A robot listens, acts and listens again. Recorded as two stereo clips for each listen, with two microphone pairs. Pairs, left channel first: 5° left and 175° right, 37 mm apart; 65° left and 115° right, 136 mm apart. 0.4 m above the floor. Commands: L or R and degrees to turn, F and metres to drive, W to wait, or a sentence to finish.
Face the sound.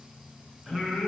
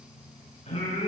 L105
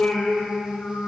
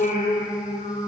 L50
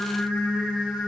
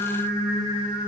Facing the singing.